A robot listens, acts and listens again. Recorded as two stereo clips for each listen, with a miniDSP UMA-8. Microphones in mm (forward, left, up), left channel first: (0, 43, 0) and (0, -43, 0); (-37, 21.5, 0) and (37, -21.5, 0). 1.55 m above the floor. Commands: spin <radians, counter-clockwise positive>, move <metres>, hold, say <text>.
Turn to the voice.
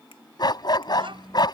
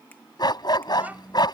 spin -1.83
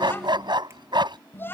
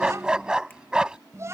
spin 0.44
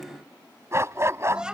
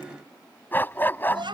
spin -0.17
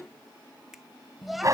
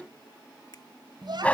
say Found it: a child speaking, straight ahead.